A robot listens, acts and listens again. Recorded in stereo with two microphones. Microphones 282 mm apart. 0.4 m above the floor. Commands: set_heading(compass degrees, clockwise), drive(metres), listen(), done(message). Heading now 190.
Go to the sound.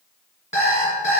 set_heading(165)
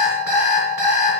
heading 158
set_heading(168)
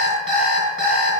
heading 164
drive(1.0)
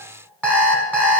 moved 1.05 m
set_heading(174)
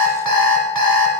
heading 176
drive(1.0)
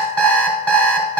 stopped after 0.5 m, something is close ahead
done("I am next to the alarm clock.")